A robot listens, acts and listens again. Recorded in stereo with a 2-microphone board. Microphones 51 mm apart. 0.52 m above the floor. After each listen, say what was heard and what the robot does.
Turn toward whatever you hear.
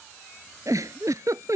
Turn 90° right.
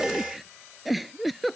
Facing the giggle.